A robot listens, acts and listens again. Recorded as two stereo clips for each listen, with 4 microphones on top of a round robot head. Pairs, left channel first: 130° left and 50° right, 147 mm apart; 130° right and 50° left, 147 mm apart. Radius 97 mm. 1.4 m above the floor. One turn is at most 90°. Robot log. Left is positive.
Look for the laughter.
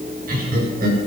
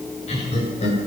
note: The laughter: 85° right.
cmd yaw -85
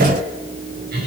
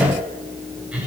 note: The laughter is now 30° right.
cmd yaw -30
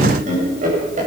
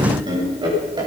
note: The laughter is now 15° right.
cmd yaw -15
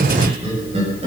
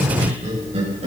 end: Facing the laughter, over 4 m away.